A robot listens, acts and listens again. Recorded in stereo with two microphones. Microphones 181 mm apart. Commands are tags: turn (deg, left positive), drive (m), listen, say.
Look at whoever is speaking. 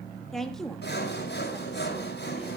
<turn deg="30"/>
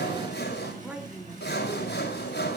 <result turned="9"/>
<turn deg="-30"/>
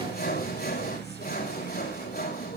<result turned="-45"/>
<listen/>
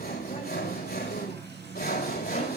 <listen/>
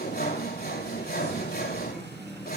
<say>I heard a woman speaking, but can't make it out now. It was about 40° left or 130° right.</say>